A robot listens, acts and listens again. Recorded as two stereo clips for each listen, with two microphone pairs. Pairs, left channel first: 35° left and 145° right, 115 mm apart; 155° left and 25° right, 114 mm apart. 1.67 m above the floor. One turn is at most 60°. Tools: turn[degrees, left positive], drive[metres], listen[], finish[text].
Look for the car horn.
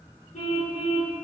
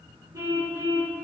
Thought: The car horn: 40° left.
Action: turn[40]
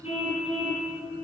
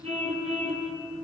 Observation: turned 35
Action: finish[Found it: a car horn, straight ahead.]